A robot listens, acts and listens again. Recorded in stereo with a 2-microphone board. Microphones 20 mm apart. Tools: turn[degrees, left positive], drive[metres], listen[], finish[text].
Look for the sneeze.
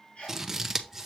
Thought: The sneeze: about 75° left or 105° left.
Action: turn[75]
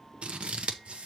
Action: listen[]
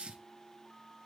Action: finish[I heard a sneeze, but can't make it out now. It was about straight ahead or 30° left.]